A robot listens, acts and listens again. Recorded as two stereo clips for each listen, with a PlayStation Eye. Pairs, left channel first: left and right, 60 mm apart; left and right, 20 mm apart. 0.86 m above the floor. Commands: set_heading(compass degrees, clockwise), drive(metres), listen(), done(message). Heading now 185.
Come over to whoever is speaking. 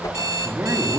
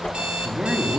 set_heading(230)
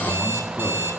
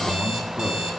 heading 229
listen()
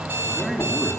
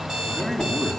drive(1.0)
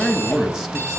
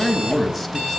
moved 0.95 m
set_heading(239)
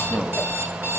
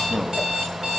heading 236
drive(1.0)
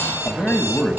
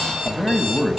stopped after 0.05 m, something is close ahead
done("Arrived at the man speaking, straight ahead.")